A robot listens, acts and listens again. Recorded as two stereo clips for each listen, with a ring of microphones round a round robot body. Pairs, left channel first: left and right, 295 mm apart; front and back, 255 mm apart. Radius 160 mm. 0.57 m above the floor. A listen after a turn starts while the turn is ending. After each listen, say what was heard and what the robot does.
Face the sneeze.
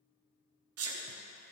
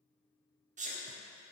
The sneeze: 120° right. Turn 120° right.
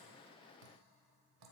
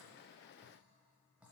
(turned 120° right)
I heard a sneeze from this way, but can't make it out now.